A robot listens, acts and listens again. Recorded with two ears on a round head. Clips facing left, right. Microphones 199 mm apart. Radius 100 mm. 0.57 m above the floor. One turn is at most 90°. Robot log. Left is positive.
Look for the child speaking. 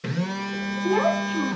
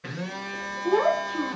note: The child speaking: about 40° left or 140° left.
cmd yaw +40
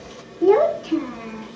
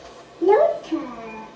note: So it is at 10° left.
cmd yaw +10
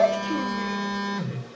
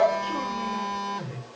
end: Found it: a child speaking, straight ahead.